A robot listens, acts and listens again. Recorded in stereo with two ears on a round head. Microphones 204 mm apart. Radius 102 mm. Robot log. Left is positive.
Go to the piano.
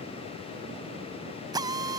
cmd idle
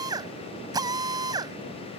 cmd idle
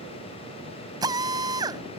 end: I can't make out a piano, only a drill.